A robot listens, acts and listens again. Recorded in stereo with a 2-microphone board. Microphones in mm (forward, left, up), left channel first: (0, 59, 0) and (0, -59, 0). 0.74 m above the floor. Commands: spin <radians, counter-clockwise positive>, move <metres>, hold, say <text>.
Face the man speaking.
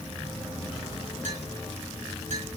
hold
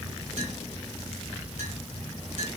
hold
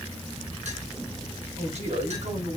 spin -1.57
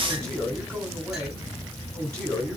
spin 0.17
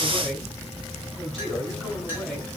say Facing the man speaking, over 4 m away.